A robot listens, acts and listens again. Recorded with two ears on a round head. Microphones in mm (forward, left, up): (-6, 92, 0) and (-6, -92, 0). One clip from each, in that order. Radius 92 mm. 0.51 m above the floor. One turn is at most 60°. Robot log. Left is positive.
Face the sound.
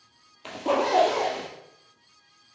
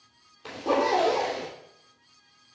note: The zipper: about 20° left or 160° left.
cmd yaw +20
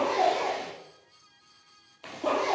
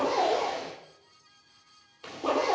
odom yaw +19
end: Found it: a zipper, straight ahead, 2 to 4 m away.